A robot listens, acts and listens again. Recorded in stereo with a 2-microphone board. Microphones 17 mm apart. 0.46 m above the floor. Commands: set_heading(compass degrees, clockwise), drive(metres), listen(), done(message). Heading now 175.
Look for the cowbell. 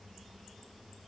listen()
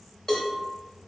set_heading(130)
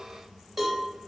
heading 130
done("Found it: a cowbell, straight ahead.")